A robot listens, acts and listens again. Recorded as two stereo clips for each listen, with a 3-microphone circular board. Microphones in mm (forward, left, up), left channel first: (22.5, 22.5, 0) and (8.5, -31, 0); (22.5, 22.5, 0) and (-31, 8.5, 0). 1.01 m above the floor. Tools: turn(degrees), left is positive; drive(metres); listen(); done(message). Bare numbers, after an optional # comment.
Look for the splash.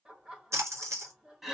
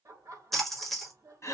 # The splash: 70° right.
turn(-70)
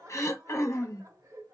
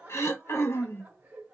done("Facing where the splash came from. I can't hear it now.")